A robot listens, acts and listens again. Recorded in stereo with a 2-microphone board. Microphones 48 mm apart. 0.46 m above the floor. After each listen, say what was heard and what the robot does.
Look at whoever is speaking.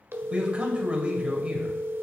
The man speaking: about 25° right or 155° right. Turn 25° right.
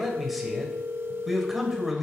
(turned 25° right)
Facing the man speaking.